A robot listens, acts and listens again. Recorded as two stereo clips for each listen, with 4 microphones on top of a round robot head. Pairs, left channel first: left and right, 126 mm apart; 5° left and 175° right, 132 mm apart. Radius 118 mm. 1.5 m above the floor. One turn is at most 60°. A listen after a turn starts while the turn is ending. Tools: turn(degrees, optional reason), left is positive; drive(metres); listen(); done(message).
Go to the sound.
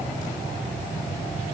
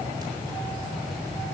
listen()
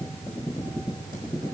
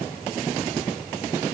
listen()
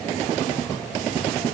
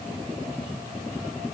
done("I can't make out anything to turn to.")